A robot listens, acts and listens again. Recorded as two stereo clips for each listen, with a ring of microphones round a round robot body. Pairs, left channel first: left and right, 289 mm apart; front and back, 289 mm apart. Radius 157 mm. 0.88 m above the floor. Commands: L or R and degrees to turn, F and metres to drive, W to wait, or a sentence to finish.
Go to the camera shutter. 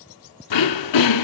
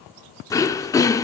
W
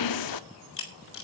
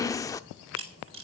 L135
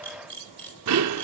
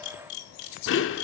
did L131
F1.0
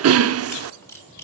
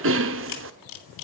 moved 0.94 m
L10
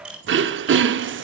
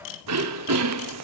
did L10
F1.0
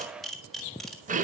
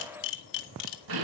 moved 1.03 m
F1.0
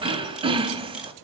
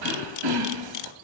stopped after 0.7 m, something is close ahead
Arrived at the camera shutter, straight ahead.